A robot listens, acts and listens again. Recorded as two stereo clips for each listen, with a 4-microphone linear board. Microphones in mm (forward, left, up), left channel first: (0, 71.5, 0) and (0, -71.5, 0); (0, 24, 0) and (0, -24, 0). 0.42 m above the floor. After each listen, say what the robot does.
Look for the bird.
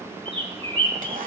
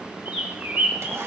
Turn 40° right.
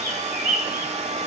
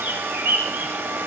Turn 95° right.
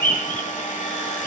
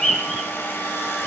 Turn 15° left.
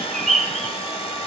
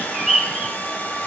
Found it: a bird, straight ahead, 2 to 4 m away.